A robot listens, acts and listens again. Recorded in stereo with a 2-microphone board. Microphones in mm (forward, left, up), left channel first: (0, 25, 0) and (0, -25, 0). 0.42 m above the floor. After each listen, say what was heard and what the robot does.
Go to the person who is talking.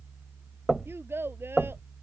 The child speaking: about 55° right or 125° right. Turn 55° right.
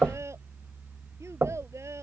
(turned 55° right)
So it is at 75° right. Turn 75° right.
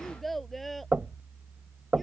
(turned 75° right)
Drive 1.0 m forward.
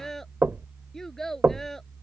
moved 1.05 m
The child speaking is now 10° left. Turn 10° left.
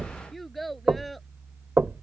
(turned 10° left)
Drive 1.0 m forward.
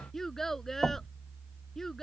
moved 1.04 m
The child speaking is now 10° left. Turn 10° left.
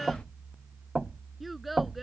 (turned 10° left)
Drive 1.0 m forward.
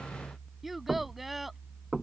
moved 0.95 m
Drive 1.0 m forward.
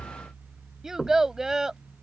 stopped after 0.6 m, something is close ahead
The child speaking is now 10° right. Turn 10° right.
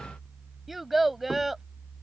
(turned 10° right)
Arrived at the child speaking, straight ahead.